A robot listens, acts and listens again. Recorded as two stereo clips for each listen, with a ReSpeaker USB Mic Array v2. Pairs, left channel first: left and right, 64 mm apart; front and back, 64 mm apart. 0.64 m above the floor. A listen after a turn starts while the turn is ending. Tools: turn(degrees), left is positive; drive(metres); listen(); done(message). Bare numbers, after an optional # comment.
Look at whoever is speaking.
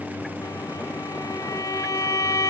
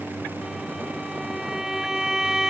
listen()
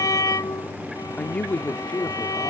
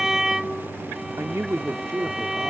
# The man speaking: 155° left.
turn(155)
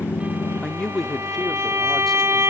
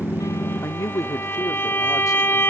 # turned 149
# The man speaking is now 10° left.
turn(10)
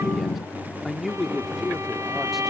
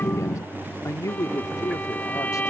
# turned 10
done("Facing the man speaking.")